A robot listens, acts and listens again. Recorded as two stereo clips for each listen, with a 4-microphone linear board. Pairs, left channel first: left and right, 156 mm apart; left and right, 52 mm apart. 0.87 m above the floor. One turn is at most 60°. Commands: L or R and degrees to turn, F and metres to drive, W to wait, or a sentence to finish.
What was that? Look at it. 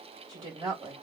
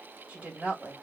R35
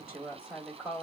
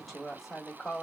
Facing the woman speaking, 1 to 2 m away.